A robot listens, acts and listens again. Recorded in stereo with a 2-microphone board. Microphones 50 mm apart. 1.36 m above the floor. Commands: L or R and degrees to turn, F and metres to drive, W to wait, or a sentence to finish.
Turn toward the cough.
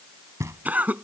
R35
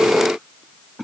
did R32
Facing the cough.